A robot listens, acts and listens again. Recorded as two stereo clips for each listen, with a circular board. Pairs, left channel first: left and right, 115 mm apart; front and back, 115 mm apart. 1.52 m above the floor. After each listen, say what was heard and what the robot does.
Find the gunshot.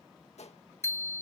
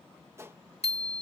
The gunshot: 115° left. Turn 115° left.
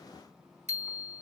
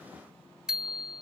I heard a gunshot from this way, but can't make it out now.